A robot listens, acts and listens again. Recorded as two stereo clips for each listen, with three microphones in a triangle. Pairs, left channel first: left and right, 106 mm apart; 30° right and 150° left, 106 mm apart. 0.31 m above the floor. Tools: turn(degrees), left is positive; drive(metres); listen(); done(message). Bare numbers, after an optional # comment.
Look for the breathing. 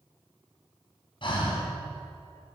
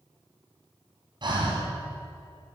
# The breathing: 115° left.
turn(115)
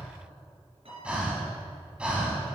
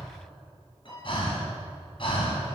# The breathing is now 10° right.
turn(-10)
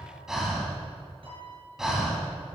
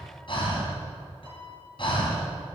done("Facing the breathing, 2 to 4 m away.")